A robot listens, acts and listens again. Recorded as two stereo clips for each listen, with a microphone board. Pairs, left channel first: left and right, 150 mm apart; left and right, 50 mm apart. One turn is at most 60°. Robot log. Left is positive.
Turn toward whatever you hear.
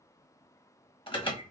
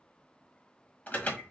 note: The alarm: about 35° left or 145° left.
cmd yaw +35
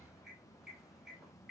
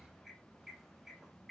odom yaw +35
end: Facing the alarm.